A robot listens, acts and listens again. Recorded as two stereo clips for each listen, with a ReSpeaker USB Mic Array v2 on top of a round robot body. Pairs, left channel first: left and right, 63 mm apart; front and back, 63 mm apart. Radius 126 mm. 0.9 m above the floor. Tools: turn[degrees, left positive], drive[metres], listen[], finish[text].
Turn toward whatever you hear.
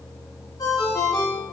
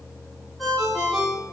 Thought: The ringtone: 95° left.
Action: turn[95]
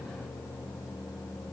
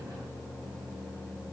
Action: listen[]
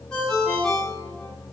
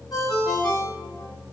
Thought: The ringtone is now 15° left.
Action: turn[15]
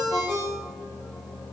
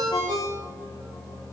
Action: finish[Facing the ringtone.]